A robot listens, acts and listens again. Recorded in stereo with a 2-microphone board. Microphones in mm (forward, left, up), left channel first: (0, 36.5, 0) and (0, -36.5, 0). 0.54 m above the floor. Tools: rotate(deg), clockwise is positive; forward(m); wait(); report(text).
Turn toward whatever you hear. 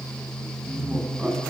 rotate(20)
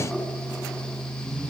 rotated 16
wait()
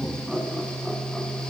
report("Found it: laughter, straight ahead, over 4 m away.")